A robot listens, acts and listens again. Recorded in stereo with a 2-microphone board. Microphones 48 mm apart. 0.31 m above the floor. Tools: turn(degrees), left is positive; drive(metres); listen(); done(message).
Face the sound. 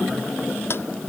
turn(degrees=55)
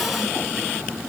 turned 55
listen()
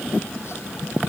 listen()
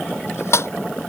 turn(degrees=70)
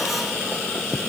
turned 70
listen()
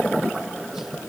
listen()
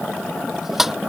done("Found it: a squeak, straight ahead.")